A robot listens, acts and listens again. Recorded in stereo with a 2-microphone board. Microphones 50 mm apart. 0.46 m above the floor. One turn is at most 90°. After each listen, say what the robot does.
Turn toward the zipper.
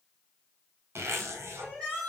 Turn 70° right.
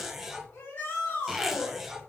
Found it: a zipper, straight ahead.